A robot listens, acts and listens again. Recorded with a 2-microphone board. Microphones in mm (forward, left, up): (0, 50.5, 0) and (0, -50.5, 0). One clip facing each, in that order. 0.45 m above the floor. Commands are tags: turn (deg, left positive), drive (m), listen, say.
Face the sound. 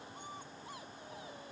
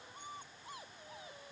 <listen/>
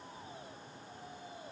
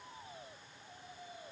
<listen/>
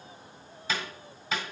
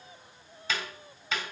<turn deg="30"/>
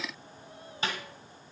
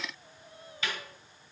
<turn deg="145"/>
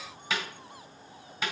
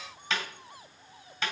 <turn deg="10"/>
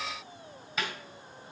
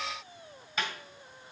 <say>Found it: a snare drum, straight ahead.</say>